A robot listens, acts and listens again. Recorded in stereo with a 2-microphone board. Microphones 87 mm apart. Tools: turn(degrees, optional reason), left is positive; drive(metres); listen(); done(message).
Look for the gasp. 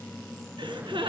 turn(degrees=-90)
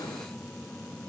done("I heard a gasp from this way, but can't make it out now.")